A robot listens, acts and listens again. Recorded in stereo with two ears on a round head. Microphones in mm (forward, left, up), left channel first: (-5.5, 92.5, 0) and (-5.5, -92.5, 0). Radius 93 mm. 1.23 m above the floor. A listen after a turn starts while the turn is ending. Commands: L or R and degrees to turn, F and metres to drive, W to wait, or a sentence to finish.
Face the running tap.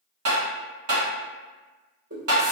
R70
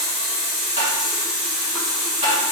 Found it: a running tap, straight ahead, 1 to 2 m away.